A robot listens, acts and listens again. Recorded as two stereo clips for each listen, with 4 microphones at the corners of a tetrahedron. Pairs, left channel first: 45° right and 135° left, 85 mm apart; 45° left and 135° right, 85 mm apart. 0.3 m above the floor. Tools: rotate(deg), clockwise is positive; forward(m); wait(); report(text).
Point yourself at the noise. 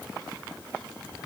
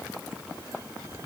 wait()
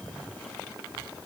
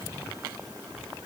wait()
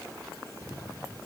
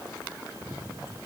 report("I can't make out anything to turn to.")